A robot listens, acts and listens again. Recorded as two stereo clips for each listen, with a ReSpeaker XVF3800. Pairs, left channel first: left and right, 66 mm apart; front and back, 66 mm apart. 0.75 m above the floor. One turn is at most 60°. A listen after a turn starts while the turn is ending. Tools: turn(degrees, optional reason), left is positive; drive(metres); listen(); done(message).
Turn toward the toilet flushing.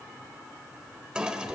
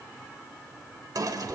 turn(degrees=-60, reason="The toilet flushing: 170° right.")
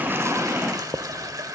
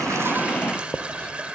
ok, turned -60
turn(degrees=-60, reason="The toilet flushing is now 110° right.")
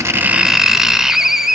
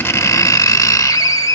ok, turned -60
turn(degrees=-50, reason="Nothing new. It was at 50° right.")
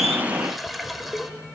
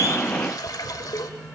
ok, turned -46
done("Found it: a toilet flushing, straight ahead.")